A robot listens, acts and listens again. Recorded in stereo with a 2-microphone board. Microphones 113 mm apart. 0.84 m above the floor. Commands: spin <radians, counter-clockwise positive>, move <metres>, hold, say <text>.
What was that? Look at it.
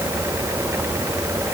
hold
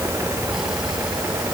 hold
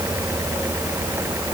say I can't make out anything to turn to.